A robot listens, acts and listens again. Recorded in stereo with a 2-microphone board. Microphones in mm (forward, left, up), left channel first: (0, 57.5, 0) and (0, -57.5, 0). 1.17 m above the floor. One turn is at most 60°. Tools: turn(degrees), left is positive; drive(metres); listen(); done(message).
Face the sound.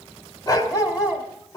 turn(degrees=35)
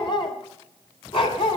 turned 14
turn(degrees=50)
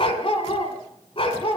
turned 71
turn(degrees=50)
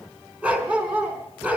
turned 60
turn(degrees=-10)
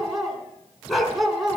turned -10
done("Found it: a dog barking, straight ahead.")